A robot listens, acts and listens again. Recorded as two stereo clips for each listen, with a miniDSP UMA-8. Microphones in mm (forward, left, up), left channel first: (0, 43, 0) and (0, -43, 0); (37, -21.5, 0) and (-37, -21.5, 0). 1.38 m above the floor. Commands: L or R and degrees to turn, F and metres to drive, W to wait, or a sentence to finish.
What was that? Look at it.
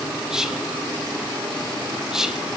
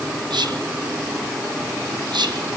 R170
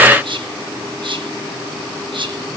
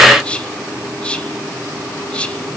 R75
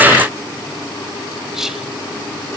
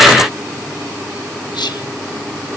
Found it: whispering, straight ahead, 1 to 2 m away.